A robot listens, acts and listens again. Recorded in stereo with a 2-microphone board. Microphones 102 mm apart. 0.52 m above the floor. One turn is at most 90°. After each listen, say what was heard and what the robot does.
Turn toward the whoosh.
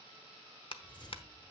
The whoosh: about 50° left or 130° left. Turn 50° left.
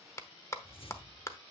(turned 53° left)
So it is at 75° left. Turn 75° left.
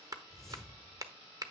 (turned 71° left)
Facing the whoosh, 1 to 2 m away.